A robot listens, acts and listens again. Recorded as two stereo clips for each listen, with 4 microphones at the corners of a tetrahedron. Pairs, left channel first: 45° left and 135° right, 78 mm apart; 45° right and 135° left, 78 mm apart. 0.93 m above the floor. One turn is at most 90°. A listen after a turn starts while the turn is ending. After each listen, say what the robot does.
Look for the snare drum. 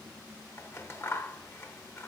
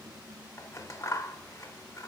Keep listening.
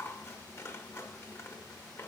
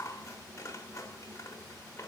Keep listening.
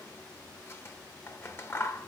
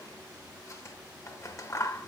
I can't make out a snare drum to turn to.